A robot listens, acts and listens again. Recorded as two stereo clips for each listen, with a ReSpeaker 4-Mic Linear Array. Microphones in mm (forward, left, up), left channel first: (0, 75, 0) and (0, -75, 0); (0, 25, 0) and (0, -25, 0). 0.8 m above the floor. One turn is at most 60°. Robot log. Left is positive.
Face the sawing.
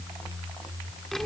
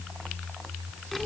cmd idle
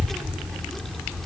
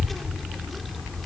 cmd idle
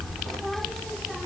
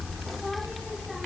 end: I can't make out sawing to turn to.